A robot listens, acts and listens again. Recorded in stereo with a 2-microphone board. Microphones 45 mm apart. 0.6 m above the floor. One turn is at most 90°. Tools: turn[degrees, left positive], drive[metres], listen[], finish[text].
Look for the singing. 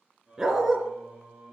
Action: turn[-30]
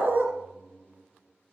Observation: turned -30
Thought: So it is at 20° left.
Action: turn[20]
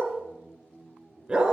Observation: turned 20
Action: finish[Facing the singing, 2 to 4 m away.]